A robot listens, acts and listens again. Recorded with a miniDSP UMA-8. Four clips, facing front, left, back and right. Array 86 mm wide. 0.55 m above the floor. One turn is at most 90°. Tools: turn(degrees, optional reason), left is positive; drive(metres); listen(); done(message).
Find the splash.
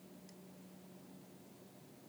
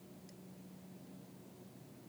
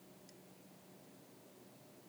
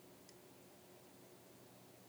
listen()
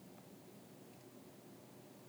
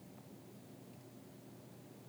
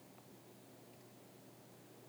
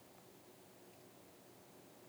listen()
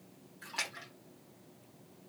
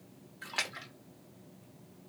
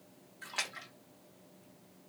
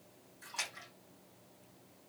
turn(degrees=90, reason="The splash: 105° left.")
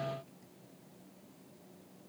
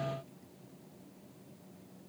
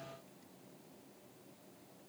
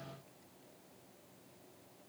turn(degrees=15, reason="Nothing new. It was at 15° left.")
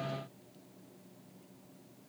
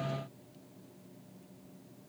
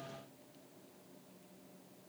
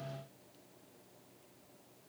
done("I heard a splash from this way, but can't make it out now.")